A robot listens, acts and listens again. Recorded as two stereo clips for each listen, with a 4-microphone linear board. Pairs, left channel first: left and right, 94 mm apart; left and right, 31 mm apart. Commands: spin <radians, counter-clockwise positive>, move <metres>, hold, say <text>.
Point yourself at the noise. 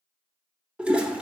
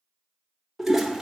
spin -0.52
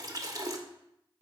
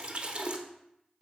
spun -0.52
spin -2.36
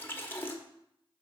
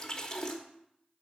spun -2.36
spin 0.44
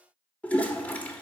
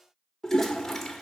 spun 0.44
spin 0.35
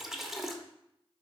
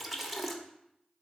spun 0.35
say Facing the toilet flushing.